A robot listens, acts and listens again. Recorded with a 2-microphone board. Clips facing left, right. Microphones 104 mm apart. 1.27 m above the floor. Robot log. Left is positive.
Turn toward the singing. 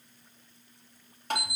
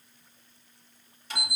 cmd idle
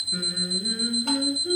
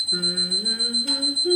note: The singing: about 70° right or 110° right.
cmd yaw -70
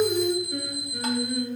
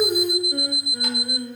note: So it is at 20° right.
cmd yaw -20
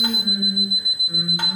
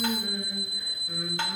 cmd idle
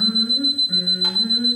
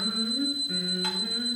note: The singing is now 15° left.
cmd yaw +15
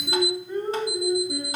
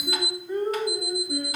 end: Found it: singing, straight ahead, over 4 m away.